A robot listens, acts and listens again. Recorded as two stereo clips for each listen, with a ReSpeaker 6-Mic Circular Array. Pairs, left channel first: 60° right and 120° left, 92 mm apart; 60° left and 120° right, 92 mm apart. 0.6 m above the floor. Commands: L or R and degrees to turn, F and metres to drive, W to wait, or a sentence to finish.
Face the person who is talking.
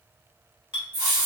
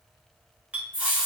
W
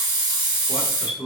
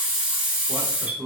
R105
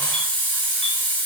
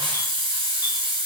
W
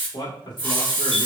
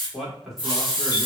R35
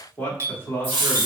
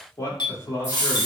Facing the man speaking, 1 to 2 m away.